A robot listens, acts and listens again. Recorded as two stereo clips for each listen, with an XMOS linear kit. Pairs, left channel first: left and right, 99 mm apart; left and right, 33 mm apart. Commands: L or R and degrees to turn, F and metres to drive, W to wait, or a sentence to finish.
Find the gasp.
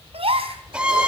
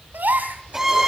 R90
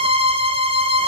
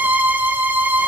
I heard a gasp from this way, but can't make it out now.